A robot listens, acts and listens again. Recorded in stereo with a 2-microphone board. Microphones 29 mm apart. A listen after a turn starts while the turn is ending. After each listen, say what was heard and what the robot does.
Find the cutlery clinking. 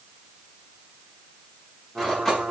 Turn 30° left.
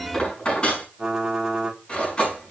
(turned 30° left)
So it is at 140° left. Turn 140° left.
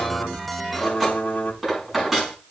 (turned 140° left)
Found it: cutlery clinking, straight ahead, over 4 m away.